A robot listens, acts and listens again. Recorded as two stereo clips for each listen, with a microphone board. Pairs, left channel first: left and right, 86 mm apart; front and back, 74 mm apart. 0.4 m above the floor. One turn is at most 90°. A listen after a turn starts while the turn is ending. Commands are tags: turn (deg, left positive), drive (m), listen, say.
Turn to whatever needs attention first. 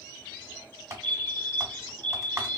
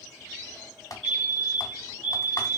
<turn deg="-65"/>
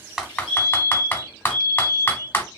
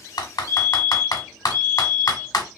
<say>Found it: a fire alarm, straight ahead, 2 to 4 m away.</say>